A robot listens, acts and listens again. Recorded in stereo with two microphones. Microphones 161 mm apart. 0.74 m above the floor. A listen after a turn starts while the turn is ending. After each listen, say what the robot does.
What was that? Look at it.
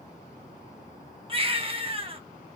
Turn 35° right.
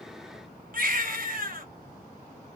Turn 105° right.
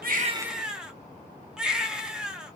Facing the baby crying, under 1 m away.